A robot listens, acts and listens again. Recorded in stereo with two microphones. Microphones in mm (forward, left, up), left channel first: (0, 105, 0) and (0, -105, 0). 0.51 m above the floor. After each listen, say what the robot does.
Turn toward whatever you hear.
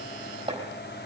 Turn 25° right.
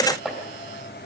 Found it: chopping, straight ahead, over 4 m away.